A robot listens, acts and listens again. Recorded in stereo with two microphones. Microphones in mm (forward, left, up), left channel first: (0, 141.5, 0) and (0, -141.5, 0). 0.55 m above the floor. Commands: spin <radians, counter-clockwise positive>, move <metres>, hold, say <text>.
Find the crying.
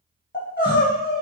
spin 0.61
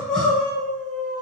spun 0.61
say Found it: crying, straight ahead, 1 to 2 m away.